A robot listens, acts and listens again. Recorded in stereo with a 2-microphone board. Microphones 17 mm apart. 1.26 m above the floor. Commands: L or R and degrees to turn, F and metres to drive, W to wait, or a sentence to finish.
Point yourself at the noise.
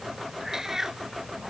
R25
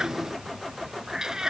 R35
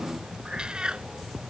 R120
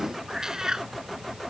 R35
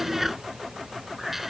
R10
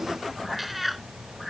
Found it: a cat meowing, straight ahead.